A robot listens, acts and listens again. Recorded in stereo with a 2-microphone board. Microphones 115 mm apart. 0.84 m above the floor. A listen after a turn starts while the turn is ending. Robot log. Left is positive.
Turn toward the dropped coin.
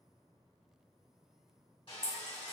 note: The dropped coin: about 30° right or 150° right.
cmd yaw -30
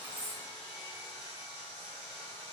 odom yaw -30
cmd idle
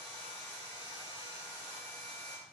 end: I heard a dropped coin, but can't make it out now. It was about straight ahead or 120° right.